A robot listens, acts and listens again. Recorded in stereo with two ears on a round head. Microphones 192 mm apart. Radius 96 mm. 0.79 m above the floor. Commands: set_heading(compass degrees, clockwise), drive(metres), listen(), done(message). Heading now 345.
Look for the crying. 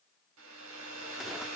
listen()
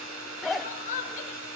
set_heading(310)
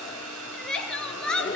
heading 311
done("Facing the crying, 2 to 4 m away.")